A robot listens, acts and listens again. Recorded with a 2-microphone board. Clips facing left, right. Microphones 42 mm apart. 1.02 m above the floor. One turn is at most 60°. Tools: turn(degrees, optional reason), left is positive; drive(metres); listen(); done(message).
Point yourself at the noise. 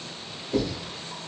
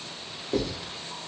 turn(degrees=-60)
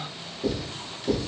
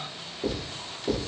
turn(degrees=-25, reason="So it is at 25° right.")
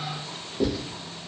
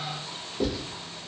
done("Found it: writing, straight ahead, 1 to 2 m away.")